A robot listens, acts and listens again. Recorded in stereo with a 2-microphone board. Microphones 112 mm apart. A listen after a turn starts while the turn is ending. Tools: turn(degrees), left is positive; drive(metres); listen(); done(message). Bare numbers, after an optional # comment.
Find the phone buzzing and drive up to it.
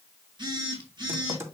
# The phone buzzing: about 40° right or 140° right.
turn(-40)
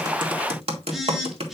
drive(1.0)
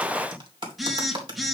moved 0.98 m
drive(1.0)
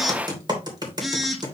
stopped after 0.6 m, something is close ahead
done("Arrived at the phone buzzing, straight ahead.")